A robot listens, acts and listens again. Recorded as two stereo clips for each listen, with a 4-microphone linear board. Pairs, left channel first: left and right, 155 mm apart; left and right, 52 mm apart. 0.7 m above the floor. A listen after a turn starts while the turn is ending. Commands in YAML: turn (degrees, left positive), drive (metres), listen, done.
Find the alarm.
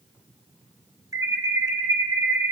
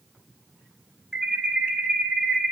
turn: -20
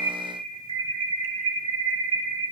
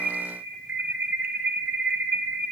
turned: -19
turn: -145
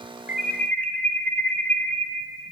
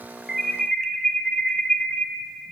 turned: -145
turn: 10
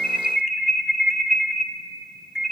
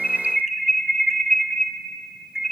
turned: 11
done: "Found it: an alarm, straight ahead."